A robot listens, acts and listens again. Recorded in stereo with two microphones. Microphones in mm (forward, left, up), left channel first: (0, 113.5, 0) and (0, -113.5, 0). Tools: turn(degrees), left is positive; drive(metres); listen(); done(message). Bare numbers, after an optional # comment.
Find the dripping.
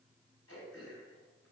listen()
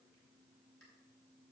listen()
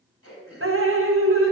# The dripping: about 65° right or 115° right.
turn(-65)
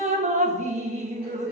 # So it is at 35° right.
turn(-35)
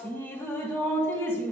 # The dripping is now 10° left.
turn(10)
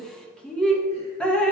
done("Found it: dripping, straight ahead, 1 to 2 m away.")